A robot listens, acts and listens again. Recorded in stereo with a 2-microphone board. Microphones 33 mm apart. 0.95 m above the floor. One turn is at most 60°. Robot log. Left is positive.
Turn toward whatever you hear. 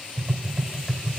cmd yaw -30
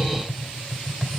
note: So it is at 25° left.
cmd yaw +25
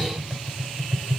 end: Facing the tapping.